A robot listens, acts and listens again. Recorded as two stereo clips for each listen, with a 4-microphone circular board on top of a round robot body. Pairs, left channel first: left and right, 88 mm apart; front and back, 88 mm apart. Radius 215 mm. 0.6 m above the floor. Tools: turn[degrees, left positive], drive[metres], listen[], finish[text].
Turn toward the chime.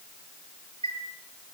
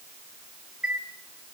Thought: The chime: 100° right.
Action: turn[-100]
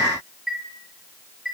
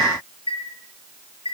Action: finish[Found it: a chime, straight ahead, over 4 m away.]